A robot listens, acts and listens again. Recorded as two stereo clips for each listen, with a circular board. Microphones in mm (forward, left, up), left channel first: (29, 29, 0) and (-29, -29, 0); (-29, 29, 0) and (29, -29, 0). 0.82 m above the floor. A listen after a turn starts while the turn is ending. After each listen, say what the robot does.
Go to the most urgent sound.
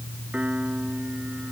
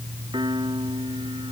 Keep listening.
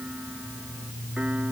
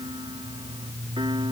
Keep listening.
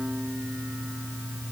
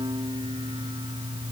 I can't make out anything urgent to turn to.